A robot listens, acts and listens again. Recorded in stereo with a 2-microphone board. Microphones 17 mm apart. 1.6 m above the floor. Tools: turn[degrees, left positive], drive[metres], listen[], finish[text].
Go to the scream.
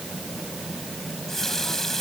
Action: listen[]
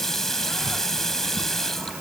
Action: listen[]
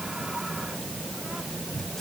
Action: finish[I can't make out a scream, only a running tap.]